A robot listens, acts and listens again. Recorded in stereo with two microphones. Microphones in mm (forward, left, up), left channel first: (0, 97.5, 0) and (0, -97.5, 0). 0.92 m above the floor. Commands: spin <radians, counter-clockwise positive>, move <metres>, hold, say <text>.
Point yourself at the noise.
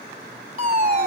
spin -0.79
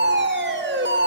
spin -1.66
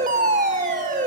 spin -0.70
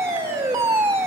spin -0.26
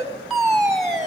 say Facing the fire alarm.